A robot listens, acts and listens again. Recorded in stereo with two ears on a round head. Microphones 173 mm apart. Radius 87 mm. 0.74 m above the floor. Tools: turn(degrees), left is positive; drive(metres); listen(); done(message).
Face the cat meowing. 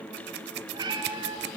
turn(degrees=-20)
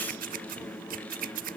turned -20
listen()
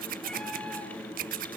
listen()
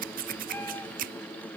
done("I heard a cat meowing, but can't make it out now. It was about straight ahead or 140° right.")